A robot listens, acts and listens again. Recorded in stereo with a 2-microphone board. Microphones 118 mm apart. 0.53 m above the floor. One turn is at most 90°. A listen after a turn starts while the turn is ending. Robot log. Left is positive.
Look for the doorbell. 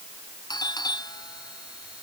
note: The doorbell: about 35° left or 145° left.
cmd yaw +35
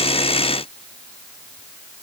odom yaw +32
cmd idle
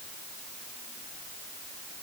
cmd idle
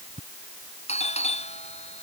note: So it is at 110° left.
cmd yaw +90
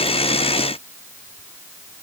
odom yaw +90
note: Nothing new. It was at 20° left.
cmd yaw +20
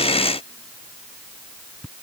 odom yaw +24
end: Facing the doorbell.